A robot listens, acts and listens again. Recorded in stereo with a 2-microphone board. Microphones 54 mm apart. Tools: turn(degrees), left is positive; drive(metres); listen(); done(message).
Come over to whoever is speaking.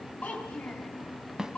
turn(degrees=30)
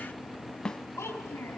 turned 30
turn(degrees=125)
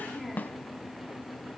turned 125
drive(metres=1.0)
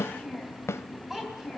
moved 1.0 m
drive(metres=1.0)
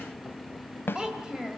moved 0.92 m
turn(degrees=-15)
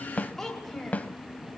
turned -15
drive(metres=1.0)
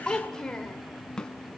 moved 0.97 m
turn(degrees=15)
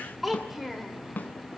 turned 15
drive(metres=1.0)
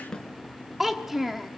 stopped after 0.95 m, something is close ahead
done("I am next to the child speaking.")